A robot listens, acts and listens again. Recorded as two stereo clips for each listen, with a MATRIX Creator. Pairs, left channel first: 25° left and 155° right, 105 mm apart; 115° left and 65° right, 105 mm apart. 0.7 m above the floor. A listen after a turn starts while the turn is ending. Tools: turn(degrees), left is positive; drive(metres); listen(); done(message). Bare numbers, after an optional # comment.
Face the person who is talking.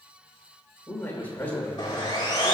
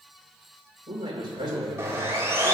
# The man speaking: 50° right.
turn(-50)
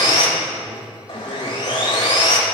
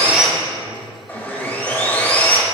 listen()
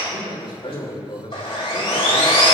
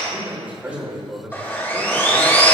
done("Found it: a man speaking, straight ahead, 2 to 4 m away.")